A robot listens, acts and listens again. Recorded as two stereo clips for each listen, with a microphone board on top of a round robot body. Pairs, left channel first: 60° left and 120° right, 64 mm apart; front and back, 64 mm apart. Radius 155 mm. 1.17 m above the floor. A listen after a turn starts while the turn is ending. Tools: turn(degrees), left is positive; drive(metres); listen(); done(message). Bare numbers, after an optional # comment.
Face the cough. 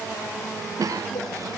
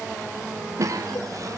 # The cough: 150° right.
turn(-150)
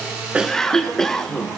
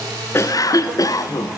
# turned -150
# The cough is now 25° right.
turn(-25)
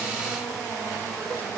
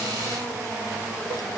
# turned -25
listen()
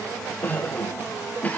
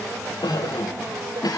done("Found it: a cough, straight ahead, 1 to 2 m away.")